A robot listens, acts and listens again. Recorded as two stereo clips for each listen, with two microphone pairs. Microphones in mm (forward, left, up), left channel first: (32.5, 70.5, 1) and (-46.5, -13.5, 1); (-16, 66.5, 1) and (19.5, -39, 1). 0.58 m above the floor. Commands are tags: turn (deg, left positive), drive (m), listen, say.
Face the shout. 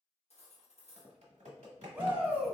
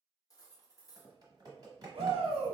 <turn deg="-60"/>
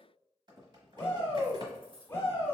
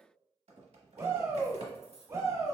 <turn deg="-20"/>
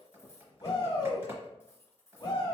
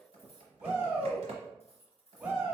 <say>Found it: a shout, straight ahead.</say>